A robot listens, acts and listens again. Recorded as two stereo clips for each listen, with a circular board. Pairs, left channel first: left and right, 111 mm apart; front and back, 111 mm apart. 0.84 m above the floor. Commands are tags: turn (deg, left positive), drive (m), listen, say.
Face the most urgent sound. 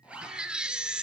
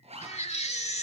<turn deg="-10"/>
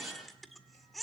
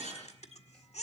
<say>Found it: a baby crying, straight ahead, 1 to 2 m away.</say>